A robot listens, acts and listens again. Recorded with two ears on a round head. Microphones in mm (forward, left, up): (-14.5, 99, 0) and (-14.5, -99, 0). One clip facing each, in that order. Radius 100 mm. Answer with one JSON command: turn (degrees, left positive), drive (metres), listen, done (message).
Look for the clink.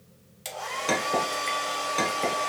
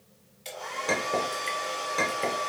{"turn": 30}
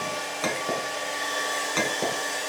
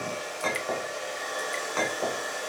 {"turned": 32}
{"turn": 140}
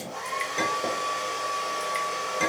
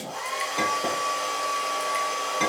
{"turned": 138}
{"done": "Facing the clink."}